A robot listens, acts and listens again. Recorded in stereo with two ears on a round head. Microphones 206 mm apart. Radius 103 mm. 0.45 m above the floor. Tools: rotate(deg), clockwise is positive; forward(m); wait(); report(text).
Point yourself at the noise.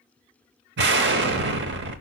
rotate(50)
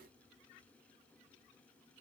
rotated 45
wait()
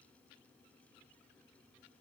report("I heard an explosion, but can't make it out now. It was about 5° right or 85° right.")